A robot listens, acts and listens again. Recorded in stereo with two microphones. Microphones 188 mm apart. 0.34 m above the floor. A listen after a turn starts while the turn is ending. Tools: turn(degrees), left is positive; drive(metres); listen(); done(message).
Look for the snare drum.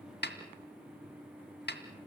turn(degrees=65)
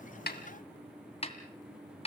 turn(degrees=35)
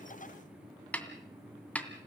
turn(degrees=10)
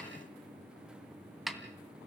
done("Facing the snare drum, 2 to 4 m away.")